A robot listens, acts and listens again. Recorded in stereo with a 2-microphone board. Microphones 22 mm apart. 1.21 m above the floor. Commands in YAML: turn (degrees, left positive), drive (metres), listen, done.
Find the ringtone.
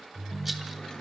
turn: 65
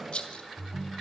turn: 40
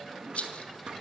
listen: true
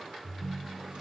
done: "Found it: a ringtone, straight ahead, 1 to 2 m away."